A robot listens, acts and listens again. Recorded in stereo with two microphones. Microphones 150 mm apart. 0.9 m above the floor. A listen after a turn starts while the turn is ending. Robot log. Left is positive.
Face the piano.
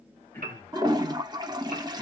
note: The piano: about 75° right or 105° right.
cmd yaw -75
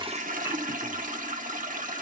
cmd idle
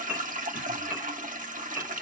note: So it is at 10° right.
cmd yaw -10
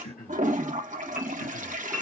cmd idle
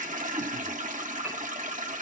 cmd idle
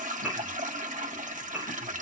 end: Facing the piano.